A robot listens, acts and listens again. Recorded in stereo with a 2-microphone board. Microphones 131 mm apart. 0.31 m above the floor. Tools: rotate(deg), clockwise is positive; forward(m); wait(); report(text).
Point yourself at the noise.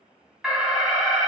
rotate(-30)
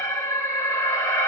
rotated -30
rotate(-155)
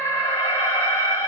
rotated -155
rotate(-20)
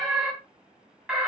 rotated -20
rotate(10)
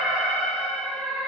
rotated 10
report("Facing the alarm, 2 to 4 m away.")